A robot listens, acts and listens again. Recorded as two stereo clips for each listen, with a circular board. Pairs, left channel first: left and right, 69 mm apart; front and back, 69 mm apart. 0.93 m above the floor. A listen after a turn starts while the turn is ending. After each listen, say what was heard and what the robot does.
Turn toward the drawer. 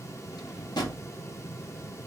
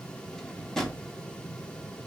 The drawer: 80° left. Turn 80° left.
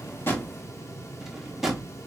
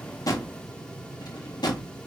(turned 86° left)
Facing the drawer.